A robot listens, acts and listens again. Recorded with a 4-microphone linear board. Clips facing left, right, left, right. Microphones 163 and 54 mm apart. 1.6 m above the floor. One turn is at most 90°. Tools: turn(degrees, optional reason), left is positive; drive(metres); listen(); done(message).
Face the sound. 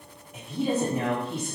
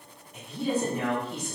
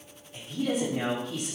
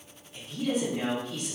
turn(degrees=90)
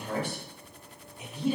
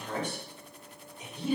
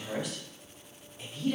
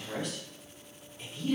turn(degrees=10, reason="So it is at 10° left.")
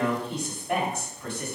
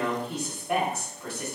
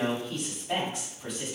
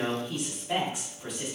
done("Found it: a woman speaking, straight ahead.")